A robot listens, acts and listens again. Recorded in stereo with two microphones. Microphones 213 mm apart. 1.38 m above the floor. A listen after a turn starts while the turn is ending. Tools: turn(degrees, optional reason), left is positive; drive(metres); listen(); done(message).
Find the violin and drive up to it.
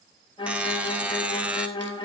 turn(degrees=25, reason="The violin: about 25° left or 155° left.")
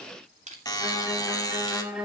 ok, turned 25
drive(metres=1.0)
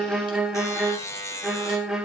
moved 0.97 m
drive(metres=1.0)
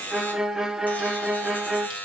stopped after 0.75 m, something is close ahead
done("I am next to the violin.")